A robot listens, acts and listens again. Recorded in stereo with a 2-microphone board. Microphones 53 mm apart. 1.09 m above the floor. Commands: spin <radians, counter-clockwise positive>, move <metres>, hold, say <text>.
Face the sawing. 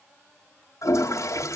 hold
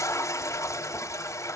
hold
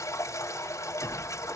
say I can't make out sawing to turn to.